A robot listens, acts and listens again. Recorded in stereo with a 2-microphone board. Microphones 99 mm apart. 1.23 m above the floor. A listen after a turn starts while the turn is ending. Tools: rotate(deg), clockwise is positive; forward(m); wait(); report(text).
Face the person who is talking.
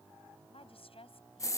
rotate(-70)
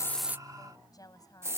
rotate(-40)
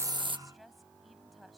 report("Found it: a woman speaking, straight ahead.")